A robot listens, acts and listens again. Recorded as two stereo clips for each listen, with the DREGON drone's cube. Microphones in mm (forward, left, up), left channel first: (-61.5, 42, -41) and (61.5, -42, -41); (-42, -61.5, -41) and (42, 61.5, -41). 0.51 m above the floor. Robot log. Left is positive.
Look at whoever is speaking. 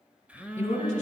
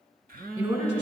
note: The woman speaking: 105° left.
cmd yaw +105
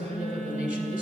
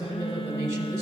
note: The woman speaking is now 10° right.
cmd yaw -10
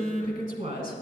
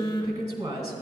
end: Found it: a woman speaking, straight ahead, 1 to 2 m away.